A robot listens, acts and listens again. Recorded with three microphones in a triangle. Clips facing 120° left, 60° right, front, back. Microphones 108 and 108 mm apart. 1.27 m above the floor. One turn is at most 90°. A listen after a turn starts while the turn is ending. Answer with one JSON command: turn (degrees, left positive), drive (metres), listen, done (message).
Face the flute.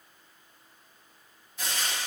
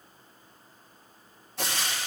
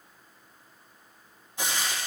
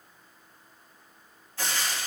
{"listen": true}
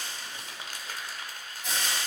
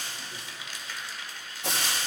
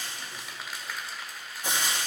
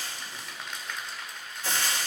{"listen": true}
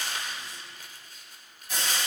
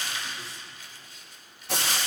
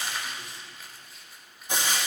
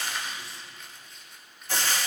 {"done": "I can't make out a flute, only frying and crumpling."}